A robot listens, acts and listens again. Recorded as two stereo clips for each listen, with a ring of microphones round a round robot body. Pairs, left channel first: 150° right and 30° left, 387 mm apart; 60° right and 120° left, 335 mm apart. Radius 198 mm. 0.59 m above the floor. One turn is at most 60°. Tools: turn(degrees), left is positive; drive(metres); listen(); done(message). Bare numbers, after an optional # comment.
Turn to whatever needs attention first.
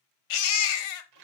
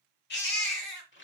# The baby crying: 125° right.
turn(-60)
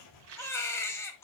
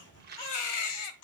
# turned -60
# The baby crying is now 65° right.
turn(-60)
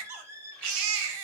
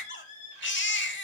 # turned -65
done("Facing the baby crying.")